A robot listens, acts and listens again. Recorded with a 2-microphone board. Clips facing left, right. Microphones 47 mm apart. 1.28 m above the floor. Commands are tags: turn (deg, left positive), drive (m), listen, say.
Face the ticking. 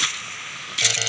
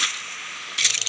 <listen/>
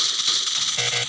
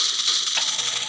<listen/>
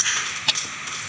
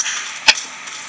<turn deg="-90"/>
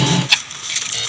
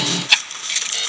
<say>Facing the ticking.</say>